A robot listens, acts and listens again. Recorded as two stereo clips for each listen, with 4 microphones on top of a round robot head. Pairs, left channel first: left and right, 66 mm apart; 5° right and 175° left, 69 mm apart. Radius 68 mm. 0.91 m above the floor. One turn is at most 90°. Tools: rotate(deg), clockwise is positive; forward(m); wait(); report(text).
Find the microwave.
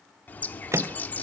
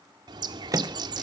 rotate(90)
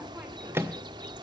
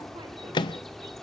rotate(30)
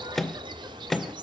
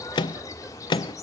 report("Facing the microwave.")